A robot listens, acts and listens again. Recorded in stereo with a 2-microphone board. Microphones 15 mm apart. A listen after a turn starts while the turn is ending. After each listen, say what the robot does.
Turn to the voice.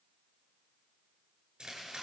Keep listening.
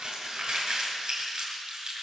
Keep listening.
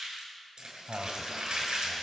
Turn 55° right.
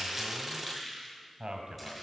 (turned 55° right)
Turn 60° right.
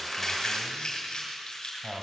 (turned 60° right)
Facing the man speaking.